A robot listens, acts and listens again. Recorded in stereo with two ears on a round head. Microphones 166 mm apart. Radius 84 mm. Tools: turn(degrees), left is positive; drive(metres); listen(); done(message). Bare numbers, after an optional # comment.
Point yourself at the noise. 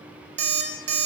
# The alarm clock: about 65° right or 115° right.
turn(-65)
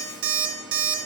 # So it is at 50° right.
turn(-50)
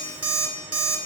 # The alarm clock is now 10° right.
turn(-10)
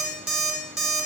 done("Found it: an alarm clock, straight ahead, 1 to 2 m away.")